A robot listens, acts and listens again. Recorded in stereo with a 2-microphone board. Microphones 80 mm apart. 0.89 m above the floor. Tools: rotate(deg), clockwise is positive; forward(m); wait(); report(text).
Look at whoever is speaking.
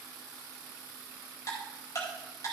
wait()
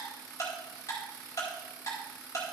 wait()
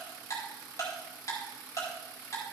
report("I can't make out anyone speaking to turn to.")